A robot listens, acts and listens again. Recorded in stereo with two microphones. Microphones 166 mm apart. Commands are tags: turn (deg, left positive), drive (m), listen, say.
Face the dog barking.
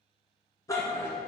<turn deg="30"/>
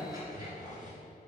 <turn deg="-30"/>
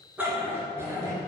<turn deg="-20"/>
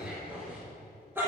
<turn deg="-15"/>
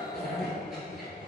<say>Facing the dog barking, 2 to 4 m away.</say>